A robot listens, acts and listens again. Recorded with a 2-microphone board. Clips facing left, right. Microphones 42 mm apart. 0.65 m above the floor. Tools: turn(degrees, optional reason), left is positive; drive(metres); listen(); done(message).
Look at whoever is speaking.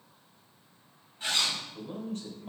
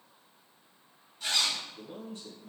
turn(degrees=55, reason="The man speaking: about 55° left or 125° left.")
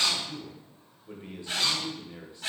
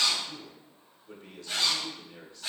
turn(degrees=30, reason="So it is at 30° left.")
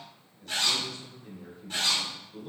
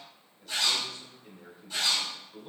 done("Found it: a man speaking, straight ahead.")